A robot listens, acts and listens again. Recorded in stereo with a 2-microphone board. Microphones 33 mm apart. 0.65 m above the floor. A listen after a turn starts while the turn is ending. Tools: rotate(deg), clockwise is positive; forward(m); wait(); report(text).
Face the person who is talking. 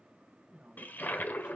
rotate(25)
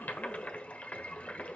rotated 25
wait()
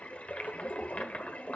wait()
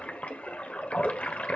report("I heard a woman speaking, but can't make it out now. It was about straight ahead or 130° right.")